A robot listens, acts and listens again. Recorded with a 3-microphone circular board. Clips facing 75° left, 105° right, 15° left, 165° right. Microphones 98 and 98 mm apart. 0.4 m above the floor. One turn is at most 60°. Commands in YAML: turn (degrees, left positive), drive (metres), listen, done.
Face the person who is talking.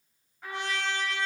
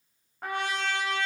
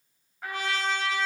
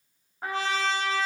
listen: true
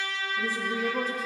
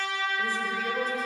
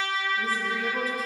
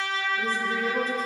turn: 60
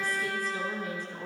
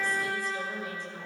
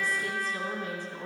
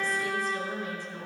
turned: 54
turn: 45
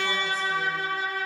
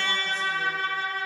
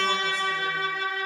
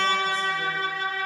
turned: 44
listen: true
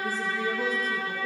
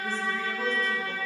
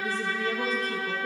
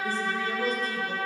done: "Facing the woman speaking."